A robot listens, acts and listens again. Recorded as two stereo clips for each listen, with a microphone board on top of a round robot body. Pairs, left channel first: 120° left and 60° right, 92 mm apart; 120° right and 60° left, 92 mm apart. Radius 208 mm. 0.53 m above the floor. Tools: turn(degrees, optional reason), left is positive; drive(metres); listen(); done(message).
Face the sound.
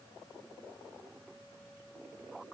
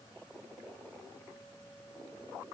listen()
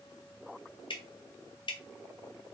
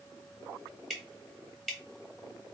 turn(degrees=150, reason="The dripping: 150° left.")
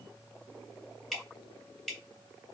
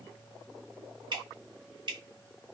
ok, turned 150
turn(degrees=35, reason="The dripping is now 35° left.")
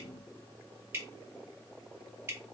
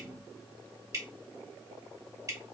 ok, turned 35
done("Found it: dripping, straight ahead.")